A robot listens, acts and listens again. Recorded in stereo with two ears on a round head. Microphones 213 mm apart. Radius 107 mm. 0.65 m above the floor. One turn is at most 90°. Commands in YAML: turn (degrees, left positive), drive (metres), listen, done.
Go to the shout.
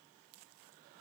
listen: true
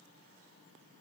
listen: true
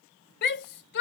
turn: 45
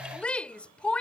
drive: 1.0
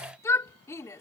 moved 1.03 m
turn: 15
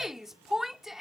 drive: 1.0
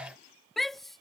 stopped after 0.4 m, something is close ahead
done: "I am next to the shout."